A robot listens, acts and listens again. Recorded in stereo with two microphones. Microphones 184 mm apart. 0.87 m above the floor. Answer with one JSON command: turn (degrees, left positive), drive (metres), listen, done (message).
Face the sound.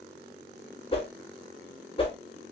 {"turn": 30}
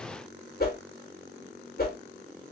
{"turn": 115}
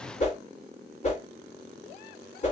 {"turn": 45}
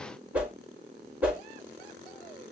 {"done": "Found it: a whoosh, straight ahead, 1 to 2 m away."}